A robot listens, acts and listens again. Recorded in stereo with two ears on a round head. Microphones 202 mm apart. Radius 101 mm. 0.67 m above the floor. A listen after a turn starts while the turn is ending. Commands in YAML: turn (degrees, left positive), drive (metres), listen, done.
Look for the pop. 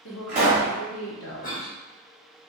turn: -35
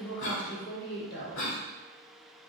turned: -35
listen: true
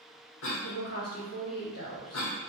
done: "I heard a pop, but can't make it out now. It was about straight ahead or 110° right."